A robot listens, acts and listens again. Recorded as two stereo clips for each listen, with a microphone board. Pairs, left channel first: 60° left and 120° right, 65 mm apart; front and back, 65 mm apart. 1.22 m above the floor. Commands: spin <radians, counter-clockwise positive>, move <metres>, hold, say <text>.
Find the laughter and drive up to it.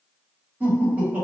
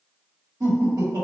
spin 3.05
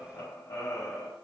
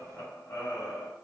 spin 0.79
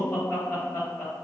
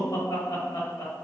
move 1.0
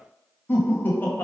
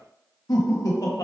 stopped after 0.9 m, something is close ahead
say Arrived at the laughter, straight ahead.